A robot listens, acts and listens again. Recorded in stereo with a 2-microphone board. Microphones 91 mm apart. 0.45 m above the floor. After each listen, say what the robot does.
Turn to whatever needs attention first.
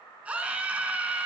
Turn 30° right.
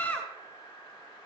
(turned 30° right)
Turn 15° left.
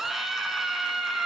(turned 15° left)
Facing the scream.